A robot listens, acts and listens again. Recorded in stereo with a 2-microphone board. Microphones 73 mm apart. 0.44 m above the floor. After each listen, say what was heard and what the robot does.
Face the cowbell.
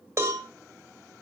The cowbell: about 40° right or 140° right. Turn 40° right.
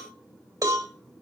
So it is at 90° right. Turn 90° right.
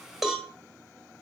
Found it: a cowbell, straight ahead.